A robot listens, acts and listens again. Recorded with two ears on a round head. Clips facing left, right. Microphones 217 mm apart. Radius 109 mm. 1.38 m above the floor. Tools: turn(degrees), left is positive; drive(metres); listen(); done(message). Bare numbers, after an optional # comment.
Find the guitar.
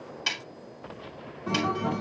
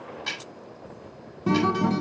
# The guitar: about 60° right or 120° right.
turn(-60)
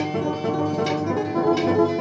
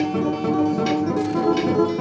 # So it is at 10° right.
turn(-10)
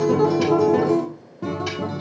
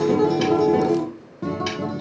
done("Facing the guitar, 1 to 2 m away.")